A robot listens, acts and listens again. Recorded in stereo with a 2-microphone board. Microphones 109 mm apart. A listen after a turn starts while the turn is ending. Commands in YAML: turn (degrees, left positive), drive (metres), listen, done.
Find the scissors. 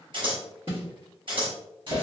turn: -50
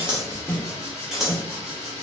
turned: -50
done: "Facing the scissors."